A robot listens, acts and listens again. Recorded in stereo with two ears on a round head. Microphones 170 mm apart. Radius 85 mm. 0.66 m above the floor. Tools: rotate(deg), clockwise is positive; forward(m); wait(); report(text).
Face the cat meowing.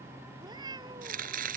rotate(25)
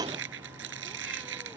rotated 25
wait()
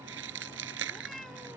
report("Facing the cat meowing.")